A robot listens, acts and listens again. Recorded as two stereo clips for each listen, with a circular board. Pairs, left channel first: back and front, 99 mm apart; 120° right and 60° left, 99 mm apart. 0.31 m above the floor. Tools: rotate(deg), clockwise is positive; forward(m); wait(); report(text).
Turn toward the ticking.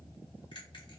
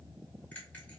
wait()
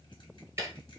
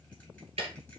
rotate(-60)
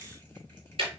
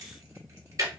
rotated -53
rotate(-10)
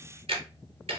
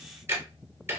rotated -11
report("Facing the ticking, 1 to 2 m away.")